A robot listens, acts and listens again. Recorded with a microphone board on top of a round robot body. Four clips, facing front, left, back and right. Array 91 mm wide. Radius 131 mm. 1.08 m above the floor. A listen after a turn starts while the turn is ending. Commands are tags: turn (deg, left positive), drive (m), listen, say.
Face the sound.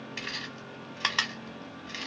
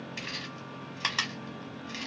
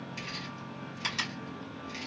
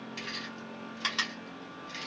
<turn deg="10"/>
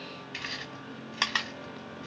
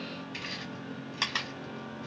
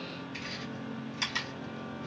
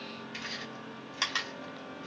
<say>Found it: chewing, straight ahead.</say>